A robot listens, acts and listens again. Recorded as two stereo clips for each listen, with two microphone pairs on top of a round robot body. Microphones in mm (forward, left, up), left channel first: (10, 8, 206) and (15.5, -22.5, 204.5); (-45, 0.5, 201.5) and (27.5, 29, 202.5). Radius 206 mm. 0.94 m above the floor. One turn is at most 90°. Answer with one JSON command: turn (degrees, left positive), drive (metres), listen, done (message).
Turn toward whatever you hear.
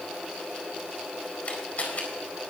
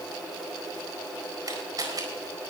{"turn": 60}
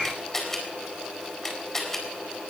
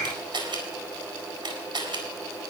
{"turn": 25}
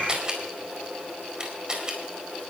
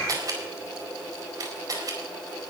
{"turn": -15}
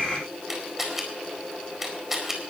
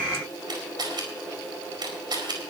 {"done": "Facing the camera shutter."}